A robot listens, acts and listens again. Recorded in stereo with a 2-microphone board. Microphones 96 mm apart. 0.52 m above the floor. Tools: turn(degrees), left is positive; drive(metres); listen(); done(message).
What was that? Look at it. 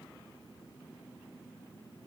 listen()
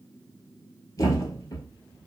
turn(degrees=40)
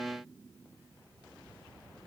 listen()
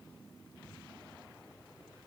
done("I heard a thud, but can't make it out now. It was about straight ahead or 100° left.")